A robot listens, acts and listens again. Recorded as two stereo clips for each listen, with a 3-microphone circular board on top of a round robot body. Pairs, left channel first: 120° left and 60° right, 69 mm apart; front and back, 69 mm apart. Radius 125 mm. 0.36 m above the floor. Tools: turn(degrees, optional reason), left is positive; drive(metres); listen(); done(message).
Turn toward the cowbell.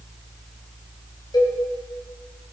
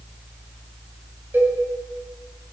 turn(degrees=120, reason="The cowbell: 120° left.")
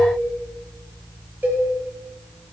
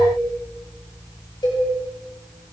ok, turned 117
done("Facing the cowbell.")